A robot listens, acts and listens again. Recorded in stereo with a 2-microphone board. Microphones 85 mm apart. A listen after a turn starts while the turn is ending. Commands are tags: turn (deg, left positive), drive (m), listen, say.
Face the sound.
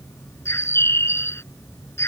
<turn deg="30"/>
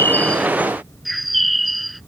<say>Found it: a bird, straight ahead.</say>